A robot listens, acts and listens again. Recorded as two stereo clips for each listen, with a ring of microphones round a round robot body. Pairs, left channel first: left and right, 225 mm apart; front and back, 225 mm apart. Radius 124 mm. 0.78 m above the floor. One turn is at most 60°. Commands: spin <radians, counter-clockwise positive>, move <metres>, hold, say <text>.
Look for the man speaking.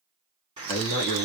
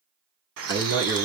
spin 1.05
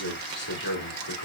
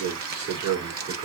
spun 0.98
spin 1.05
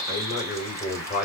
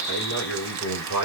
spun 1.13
spin 0.70
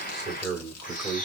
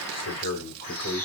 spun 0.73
say Facing the man speaking.